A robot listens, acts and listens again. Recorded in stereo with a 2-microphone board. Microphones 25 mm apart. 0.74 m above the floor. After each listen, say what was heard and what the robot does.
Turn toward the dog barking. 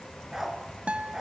The dog barking: about 15° right or 165° right. Turn 15° right.
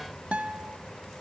Keep listening.
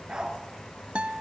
So it is at 150° right. Turn 150° right.
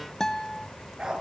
The dog barking is now 35° right. Turn 35° right.
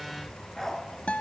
The dog barking is now 10° left. Turn 10° left.
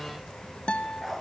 Found it: a dog barking, straight ahead, 2 to 4 m away.